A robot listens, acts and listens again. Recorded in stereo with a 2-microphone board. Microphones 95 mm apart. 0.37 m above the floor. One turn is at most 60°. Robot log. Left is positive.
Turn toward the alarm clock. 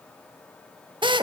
cmd idle
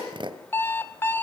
note: The alarm clock: about 20° left or 160° left.
cmd yaw +20
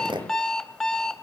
end: Found it: an alarm clock, straight ahead.